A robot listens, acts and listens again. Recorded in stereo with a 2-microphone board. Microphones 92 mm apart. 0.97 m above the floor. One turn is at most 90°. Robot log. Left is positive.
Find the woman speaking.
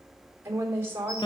note: The woman speaking: about 25° right or 155° right.
cmd yaw -25
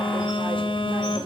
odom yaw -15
cmd idle
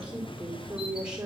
note: So it is at 10° right.
cmd yaw -10
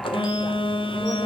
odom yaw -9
cmd idle
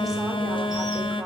cmd idle
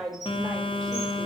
end: Found it: a woman speaking, straight ahead.